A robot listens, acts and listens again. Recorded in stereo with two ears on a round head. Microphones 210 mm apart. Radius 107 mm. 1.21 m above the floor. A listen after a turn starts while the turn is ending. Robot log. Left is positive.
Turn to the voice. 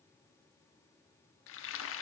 cmd idle
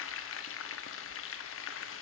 cmd idle
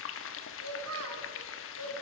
note: The child speaking: about 65° right or 115° right.
cmd yaw -65
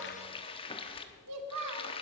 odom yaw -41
note: So it is at 70° right.
cmd yaw -70
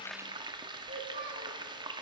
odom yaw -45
note: The child speaking is now 30° right.
cmd yaw -30
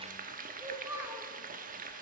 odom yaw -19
note: The child speaking is now 10° right.
cmd yaw -10
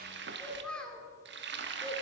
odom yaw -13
end: Found it: a child speaking, straight ahead, 2 to 4 m away.